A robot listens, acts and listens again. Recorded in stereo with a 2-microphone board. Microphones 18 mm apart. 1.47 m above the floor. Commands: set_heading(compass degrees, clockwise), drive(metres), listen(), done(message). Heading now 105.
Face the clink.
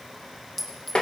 set_heading(75)
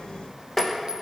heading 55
listen()
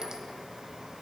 listen()
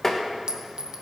set_heading(95)
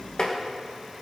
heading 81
set_heading(96)
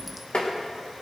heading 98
listen()
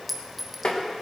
done("Facing the clink.")